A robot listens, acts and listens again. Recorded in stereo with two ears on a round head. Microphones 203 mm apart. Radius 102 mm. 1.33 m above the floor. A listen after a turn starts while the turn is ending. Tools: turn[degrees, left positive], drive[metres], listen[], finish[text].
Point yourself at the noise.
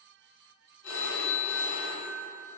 Thought: The phone ringing: about 65° left or 115° left.
Action: turn[65]
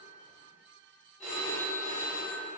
Action: finish[Found it: a phone ringing, straight ahead, 1 to 2 m away.]